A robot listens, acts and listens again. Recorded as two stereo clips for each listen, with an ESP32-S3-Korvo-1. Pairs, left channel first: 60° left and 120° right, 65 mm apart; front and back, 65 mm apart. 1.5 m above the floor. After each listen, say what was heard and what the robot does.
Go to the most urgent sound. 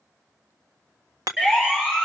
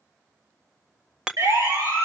The siren: 160° left. Turn 160° left.
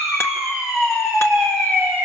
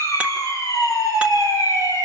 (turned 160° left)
The siren is now 10° left. Turn 10° left.
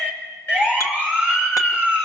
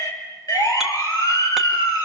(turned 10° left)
Drive 1.0 m forward.
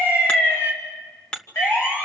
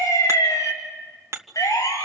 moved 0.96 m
Drive 1.0 m forward.
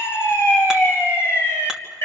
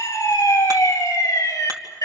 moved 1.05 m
The siren is now 15° left. Turn 15° left.
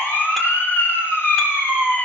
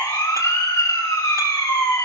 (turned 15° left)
Drive 1.0 m forward.
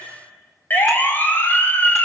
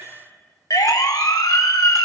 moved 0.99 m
Drive 1.0 m forward.
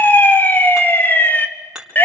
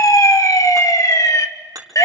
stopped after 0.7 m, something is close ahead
Arrived at the siren, straight ahead.